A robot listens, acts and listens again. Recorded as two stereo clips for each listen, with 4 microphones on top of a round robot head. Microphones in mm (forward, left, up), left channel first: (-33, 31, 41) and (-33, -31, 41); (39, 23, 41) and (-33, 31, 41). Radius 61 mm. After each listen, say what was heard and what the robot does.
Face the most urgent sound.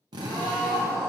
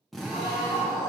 The scream: 20° right. Turn 20° right.
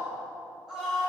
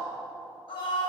Found it: a scream, straight ahead.